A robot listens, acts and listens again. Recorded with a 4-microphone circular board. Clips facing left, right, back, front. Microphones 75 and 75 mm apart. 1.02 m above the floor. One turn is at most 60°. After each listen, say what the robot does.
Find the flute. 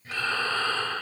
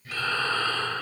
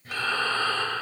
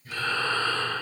Keep listening.
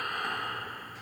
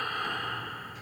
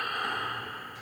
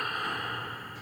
Keep listening.
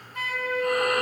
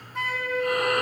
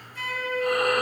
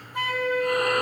Turn 20° right.
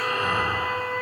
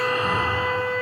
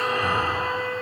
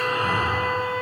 Found it: a flute, straight ahead.